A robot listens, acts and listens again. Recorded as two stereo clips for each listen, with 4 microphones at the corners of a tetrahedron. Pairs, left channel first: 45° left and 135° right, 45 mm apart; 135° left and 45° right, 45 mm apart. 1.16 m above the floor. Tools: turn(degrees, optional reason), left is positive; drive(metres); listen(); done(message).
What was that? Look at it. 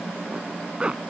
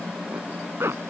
turn(degrees=-70, reason="The zipper: 70° right.")
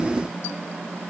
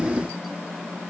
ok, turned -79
turn(degrees=10, reason="Nothing new. It was at 10° left.")
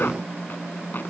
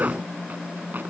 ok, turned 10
listen()
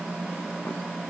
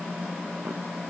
done("Facing where the zipper came from. I can't hear it now.")